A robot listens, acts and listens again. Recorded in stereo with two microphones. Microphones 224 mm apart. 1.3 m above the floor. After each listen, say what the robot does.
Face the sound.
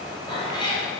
Turn 20° left.
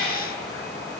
Turn 30° left.
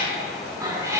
Turn 15° right.
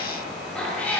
Facing the cat meowing, 2 to 4 m away.